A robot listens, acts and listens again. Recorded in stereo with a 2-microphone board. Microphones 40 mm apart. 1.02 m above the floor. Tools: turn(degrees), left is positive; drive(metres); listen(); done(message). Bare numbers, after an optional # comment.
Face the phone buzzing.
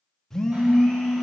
turn(30)
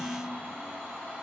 listen()
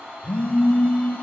# So it is at 140° left.
turn(140)
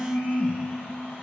# The phone buzzing is now 35° right.
turn(-35)
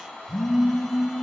# The phone buzzing is now 10° left.
turn(10)
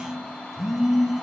done("Found it: a phone buzzing, straight ahead.")